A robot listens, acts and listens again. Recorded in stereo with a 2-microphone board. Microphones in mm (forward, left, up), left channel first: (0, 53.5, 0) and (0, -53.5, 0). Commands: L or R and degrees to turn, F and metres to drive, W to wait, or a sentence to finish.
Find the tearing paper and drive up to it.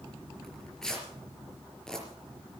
L30
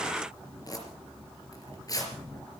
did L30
L145
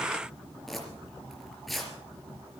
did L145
F1.0
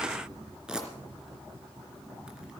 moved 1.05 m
R10
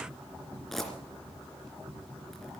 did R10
F1.0
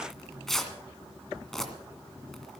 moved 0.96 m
F1.0
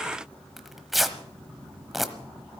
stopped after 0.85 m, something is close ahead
Arrived at the tearing paper, straight ahead.